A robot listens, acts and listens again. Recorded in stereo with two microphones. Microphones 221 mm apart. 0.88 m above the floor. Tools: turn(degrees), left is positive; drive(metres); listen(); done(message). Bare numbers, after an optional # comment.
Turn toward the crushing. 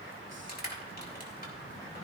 # The crushing: about 45° left or 135° left.
turn(45)
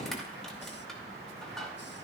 done("Found it: crushing, straight ahead, 2 to 4 m away.")